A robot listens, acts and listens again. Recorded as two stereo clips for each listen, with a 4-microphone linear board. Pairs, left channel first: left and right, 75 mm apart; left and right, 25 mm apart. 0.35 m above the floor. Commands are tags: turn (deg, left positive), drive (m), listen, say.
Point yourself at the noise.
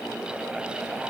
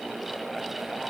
<listen/>
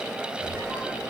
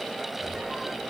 <turn deg="-25"/>
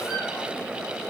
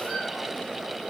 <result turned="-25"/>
<listen/>
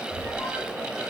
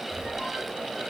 <say>Facing the squeak, 2 to 4 m away.</say>